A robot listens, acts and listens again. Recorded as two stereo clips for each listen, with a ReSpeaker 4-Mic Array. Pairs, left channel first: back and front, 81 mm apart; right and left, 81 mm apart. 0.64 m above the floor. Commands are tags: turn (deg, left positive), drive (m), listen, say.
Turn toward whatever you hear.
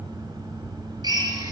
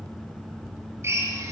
<turn deg="30"/>
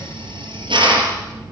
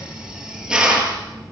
<say>Found it: a drill, straight ahead.</say>